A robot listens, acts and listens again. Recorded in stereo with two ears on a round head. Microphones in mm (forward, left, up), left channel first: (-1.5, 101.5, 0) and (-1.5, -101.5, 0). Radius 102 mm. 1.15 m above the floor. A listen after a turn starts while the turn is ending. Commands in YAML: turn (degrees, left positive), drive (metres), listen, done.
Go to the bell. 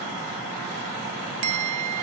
turn: -70
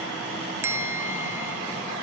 turn: -10
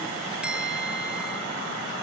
listen: true
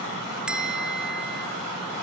drive: 1.0
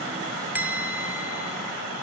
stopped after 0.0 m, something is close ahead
turn: -10
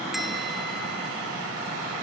listen: true
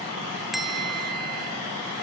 done: "Something is in my way. I am facing the bell but have not reached it."